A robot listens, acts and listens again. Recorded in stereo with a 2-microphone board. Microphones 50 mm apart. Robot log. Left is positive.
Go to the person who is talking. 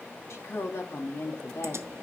cmd yaw +90
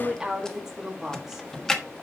note: So it is at 10° right.
cmd yaw -10
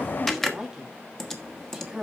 cmd fwd 1.0
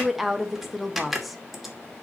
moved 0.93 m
cmd fwd 1.0
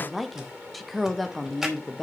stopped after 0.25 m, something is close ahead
end: Arrived at the woman speaking, straight ahead.